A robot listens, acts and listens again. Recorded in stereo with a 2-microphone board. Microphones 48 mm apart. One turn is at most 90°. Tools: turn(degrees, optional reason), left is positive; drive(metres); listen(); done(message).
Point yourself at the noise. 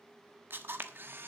turn(degrees=-50, reason="The camera shutter: about 50° right or 130° right.")
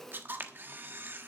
turn(degrees=-60, reason="So it is at 60° right.")
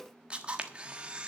turn(degrees=-25, reason="The camera shutter is now 25° right.")
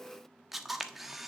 done("Facing the camera shutter, 1 to 2 m away.")